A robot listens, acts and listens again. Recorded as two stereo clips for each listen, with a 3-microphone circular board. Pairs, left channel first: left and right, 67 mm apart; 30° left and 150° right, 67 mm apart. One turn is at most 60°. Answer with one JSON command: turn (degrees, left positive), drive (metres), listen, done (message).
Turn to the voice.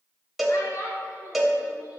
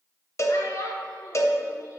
{"turn": 60}
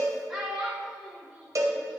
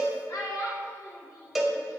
{"done": "Found it: a child speaking, straight ahead."}